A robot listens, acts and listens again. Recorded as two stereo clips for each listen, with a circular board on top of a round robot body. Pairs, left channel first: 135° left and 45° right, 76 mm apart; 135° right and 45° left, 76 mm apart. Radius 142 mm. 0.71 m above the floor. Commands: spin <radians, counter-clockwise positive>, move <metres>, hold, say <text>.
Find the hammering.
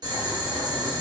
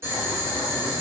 hold
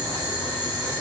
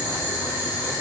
hold
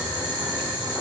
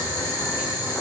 say I can't make out hammering to turn to.